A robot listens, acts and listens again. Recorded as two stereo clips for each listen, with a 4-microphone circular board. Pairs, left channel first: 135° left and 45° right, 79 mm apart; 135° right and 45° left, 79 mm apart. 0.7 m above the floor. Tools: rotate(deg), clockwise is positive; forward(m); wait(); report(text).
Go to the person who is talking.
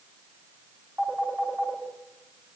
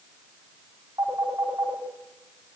wait()
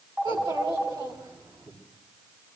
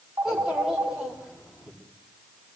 rotate(40)
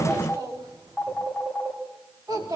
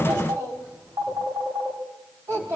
forward(1.0)
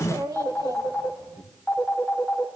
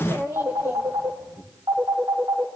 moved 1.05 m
rotate(10)
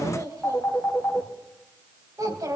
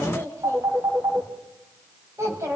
forward(1.0)
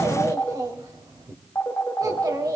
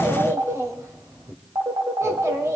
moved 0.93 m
forward(1.0)
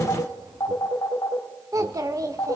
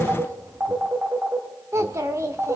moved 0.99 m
forward(1.0)
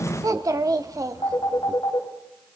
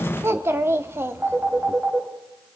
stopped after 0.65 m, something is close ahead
rotate(10)
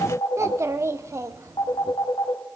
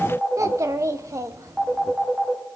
report("I am next to the child speaking.")